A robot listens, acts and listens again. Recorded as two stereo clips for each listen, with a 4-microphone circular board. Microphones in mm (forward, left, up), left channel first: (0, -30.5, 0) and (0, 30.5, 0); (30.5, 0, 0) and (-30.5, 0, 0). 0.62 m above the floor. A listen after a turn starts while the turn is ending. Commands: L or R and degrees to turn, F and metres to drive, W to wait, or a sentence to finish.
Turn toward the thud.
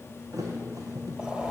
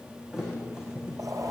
L100
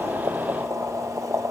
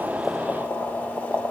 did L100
Facing where the thud came from. I can't hear it now.